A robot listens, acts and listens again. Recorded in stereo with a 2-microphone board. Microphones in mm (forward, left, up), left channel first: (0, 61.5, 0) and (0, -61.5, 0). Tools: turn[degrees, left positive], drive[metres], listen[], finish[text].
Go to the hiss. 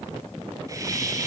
Thought: The hiss: about 30° right or 150° right.
Action: turn[-30]
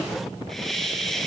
Action: drive[1.0]
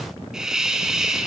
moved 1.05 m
Action: drive[1.0]
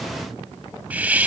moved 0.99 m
Thought: The hiss is now 15° right.
Action: turn[-15]
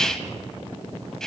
Action: drive[1.0]
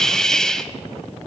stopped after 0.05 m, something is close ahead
Action: finish[I am next to the hiss.]